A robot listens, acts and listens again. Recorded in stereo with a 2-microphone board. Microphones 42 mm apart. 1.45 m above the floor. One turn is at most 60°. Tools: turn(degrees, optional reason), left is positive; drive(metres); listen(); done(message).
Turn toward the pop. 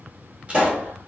turn(degrees=-30, reason="The pop: about 30° right or 150° right.")
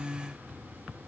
listen()
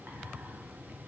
done("I heard a pop, but can't make it out now. It was about straight ahead or 120° right.")